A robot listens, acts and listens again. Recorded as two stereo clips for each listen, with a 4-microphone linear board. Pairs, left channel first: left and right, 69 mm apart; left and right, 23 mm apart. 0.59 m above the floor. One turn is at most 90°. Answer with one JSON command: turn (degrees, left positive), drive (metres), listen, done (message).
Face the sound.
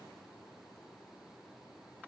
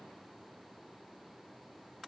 {"listen": true}
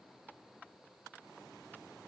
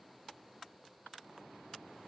{"listen": true}
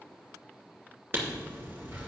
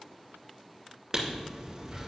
{"turn": -30}
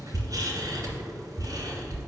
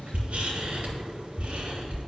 {"turn": -90}
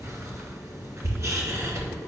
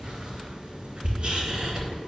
{"turn": -45}
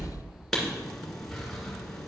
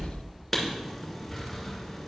{"done": "Facing the writing, 2 to 4 m away."}